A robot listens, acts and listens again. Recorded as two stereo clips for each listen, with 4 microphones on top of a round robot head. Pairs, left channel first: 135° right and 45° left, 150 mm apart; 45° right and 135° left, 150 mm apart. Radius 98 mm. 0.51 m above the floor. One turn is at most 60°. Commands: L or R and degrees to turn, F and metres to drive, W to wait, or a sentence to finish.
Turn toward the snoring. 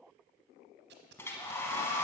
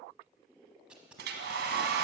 W
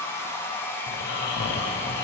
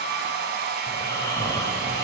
R60
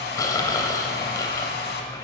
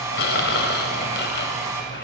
R60
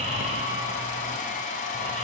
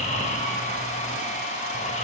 Found it: snoring, straight ahead, under 1 m away.